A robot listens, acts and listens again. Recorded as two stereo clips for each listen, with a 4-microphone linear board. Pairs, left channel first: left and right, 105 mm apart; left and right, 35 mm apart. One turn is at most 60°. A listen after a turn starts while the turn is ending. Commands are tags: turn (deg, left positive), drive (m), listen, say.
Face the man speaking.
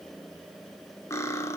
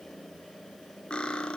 <listen/>
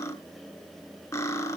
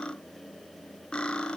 <listen/>
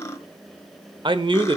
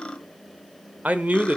<turn deg="-50"/>
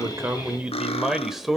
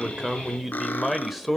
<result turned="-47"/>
<say>Found it: a man speaking, straight ahead, 1 to 2 m away.</say>